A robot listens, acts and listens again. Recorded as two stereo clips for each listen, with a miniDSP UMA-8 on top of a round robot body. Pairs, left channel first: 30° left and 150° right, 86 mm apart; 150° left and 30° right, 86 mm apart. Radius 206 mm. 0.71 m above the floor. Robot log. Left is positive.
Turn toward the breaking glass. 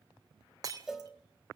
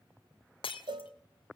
note: The breaking glass: 165° left.
cmd yaw +165
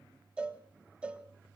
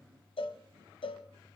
end: Facing where the breaking glass came from. I can't hear it now.